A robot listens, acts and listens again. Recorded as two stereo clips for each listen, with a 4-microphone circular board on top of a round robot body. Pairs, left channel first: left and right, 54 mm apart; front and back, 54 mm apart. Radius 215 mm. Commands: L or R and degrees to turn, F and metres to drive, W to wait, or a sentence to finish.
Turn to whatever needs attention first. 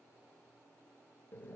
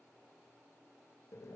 W
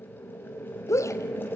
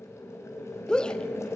L75
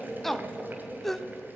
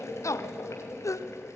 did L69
Found it: a shout, straight ahead.